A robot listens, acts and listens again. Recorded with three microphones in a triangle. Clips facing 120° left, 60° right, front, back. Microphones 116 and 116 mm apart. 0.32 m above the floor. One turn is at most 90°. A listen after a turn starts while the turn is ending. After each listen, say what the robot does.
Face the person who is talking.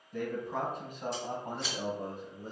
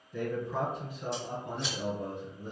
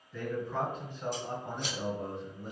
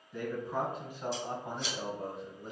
Turn 85° left.
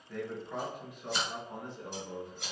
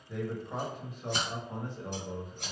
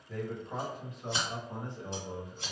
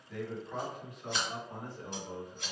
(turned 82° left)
Turn 65° right.
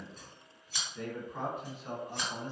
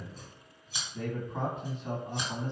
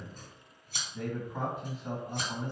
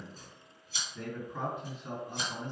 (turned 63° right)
Turn 20° right.
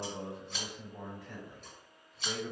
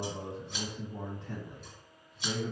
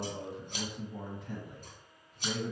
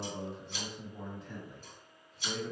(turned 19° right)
Found it: a man speaking, straight ahead.